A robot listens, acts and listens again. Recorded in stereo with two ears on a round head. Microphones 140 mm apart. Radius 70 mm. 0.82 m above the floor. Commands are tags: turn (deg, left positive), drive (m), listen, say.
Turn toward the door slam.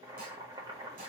<listen/>
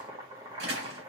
<turn deg="-90"/>
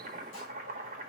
<say>Facing where the door slam came from. I can't hear it now.</say>